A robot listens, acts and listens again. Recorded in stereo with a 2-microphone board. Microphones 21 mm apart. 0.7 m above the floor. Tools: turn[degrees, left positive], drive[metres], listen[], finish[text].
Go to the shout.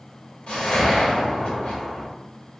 Action: listen[]
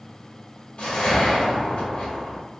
Action: listen[]
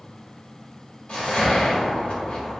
Action: finish[I can't make out a shout, only a whoosh.]